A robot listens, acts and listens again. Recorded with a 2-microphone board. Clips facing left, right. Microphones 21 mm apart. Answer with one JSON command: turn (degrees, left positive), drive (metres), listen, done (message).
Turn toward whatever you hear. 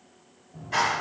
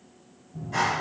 {"turn": 45}
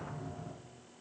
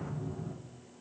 {"turn": 90}
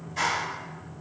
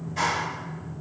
{"done": "Found it: a clap, straight ahead, 1 to 2 m away."}